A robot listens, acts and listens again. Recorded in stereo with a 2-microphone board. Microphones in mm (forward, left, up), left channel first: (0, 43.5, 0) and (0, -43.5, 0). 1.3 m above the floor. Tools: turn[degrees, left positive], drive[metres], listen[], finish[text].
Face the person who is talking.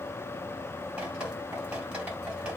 Action: listen[]
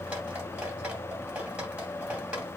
Action: listen[]
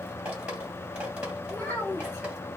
Thought: The child speaking: about 25° left or 155° left.
Action: turn[25]
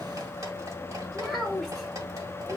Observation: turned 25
Action: finish[Facing the child speaking, 2 to 4 m away.]